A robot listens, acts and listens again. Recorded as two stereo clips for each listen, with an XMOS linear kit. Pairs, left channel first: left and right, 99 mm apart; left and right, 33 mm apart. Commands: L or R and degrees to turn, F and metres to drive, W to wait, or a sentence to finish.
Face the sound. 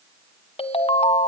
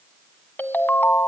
L90
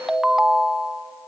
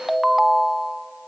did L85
Facing the ringtone.